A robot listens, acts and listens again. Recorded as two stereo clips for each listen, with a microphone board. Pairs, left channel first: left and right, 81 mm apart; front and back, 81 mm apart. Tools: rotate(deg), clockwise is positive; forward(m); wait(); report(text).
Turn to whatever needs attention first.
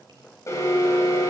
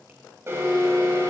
rotate(-130)
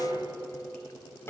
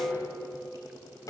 rotate(-35)
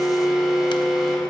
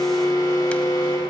report("Facing the alarm, 2 to 4 m away.")